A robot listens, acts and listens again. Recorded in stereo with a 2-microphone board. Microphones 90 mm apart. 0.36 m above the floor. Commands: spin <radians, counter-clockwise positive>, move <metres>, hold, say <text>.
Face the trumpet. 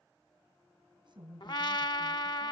spin 0.96
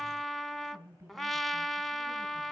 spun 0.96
say Found it: a trumpet, straight ahead, under 1 m away.